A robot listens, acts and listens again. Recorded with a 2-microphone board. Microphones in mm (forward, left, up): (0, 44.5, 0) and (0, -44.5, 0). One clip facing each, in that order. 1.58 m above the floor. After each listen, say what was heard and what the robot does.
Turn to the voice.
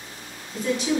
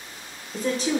The woman speaking: about 35° right or 145° right. Turn 35° right.
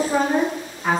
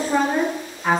Found it: a woman speaking, straight ahead.